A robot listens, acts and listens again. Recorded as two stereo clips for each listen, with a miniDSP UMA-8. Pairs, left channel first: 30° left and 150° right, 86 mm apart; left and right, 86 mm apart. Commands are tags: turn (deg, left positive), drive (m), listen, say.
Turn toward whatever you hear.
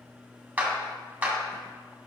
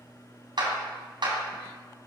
<turn deg="-80"/>
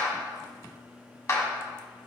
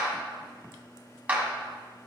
<turn deg="-20"/>
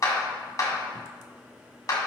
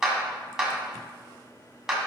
<say>Facing the clap.</say>